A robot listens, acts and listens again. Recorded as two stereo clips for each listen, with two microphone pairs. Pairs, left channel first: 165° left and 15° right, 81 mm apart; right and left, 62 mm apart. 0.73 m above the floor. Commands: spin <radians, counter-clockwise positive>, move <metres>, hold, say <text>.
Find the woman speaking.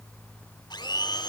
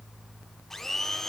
hold
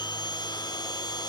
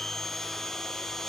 hold
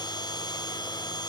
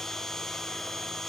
say I can't make out a woman speaking to turn to.